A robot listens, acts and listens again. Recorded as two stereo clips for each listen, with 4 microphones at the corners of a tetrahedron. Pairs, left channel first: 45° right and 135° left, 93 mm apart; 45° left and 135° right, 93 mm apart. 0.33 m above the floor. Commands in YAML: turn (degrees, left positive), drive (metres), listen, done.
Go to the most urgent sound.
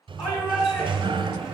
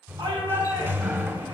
turn: -90
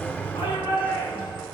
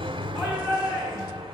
drive: 1.0
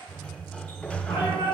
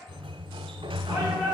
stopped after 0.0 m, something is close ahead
done: "Blocked. The shout is further on, straight ahead."